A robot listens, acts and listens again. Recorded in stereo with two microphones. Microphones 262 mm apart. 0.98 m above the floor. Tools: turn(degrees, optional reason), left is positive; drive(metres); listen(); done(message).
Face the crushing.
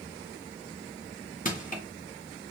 turn(degrees=30, reason="The crushing: about 30° left or 150° left.")
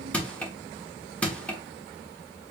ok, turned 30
done("Facing the crushing, under 1 m away.")